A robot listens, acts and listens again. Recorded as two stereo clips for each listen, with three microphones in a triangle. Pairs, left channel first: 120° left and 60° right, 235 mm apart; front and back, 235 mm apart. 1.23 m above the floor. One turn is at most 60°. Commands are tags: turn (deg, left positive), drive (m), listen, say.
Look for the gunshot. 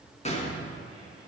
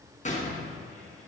<turn deg="55"/>
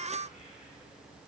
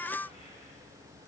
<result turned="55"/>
<say>I heard a gunshot from this way, but can't make it out now.</say>